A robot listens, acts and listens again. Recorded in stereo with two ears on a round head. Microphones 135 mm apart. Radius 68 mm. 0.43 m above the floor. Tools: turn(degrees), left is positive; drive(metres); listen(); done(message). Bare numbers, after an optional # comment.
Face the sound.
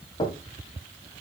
# The knocking: about 35° left or 145° left.
turn(35)
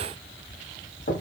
# So it is at 105° left.
turn(105)
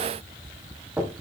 # The knocking is now 10° right.
turn(-10)
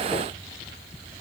listen()
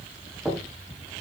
done("Facing the knocking, 2 to 4 m away.")